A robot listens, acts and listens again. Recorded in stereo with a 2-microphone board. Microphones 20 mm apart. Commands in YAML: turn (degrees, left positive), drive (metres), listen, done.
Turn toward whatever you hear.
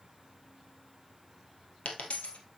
turn: 90
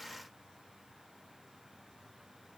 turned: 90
done: "I heard a dropped coin from this way, but can't make it out now."